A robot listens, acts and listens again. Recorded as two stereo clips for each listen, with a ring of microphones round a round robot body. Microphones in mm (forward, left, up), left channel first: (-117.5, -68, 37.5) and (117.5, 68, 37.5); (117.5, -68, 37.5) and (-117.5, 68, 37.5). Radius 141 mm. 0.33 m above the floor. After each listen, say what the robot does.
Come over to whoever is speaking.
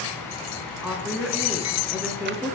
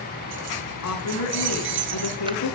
Turn 55° right.
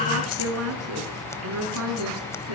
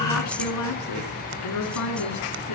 Drive 1.0 m forward.
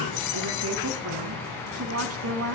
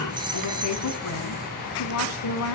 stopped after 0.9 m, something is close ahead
Something is in my way. I am facing the woman speaking but have not reached it.